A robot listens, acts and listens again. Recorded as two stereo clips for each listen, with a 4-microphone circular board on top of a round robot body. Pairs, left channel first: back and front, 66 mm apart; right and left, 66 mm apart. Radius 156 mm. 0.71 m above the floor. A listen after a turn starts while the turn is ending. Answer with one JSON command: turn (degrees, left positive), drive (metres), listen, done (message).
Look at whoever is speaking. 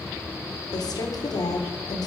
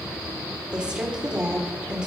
{"turn": 165}
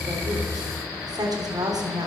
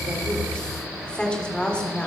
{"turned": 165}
{"turn": -15}
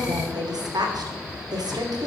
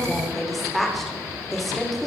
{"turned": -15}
{"done": "Found it: a woman speaking, straight ahead, 2 to 4 m away."}